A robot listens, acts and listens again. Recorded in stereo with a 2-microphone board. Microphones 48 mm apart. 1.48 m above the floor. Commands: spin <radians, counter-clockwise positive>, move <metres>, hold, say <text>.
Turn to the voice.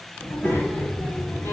spin 1.05
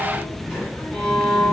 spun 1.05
spin 0.96
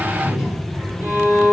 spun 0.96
spin -0.17
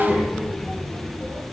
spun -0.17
say Found it: a child speaking, straight ahead, over 4 m away.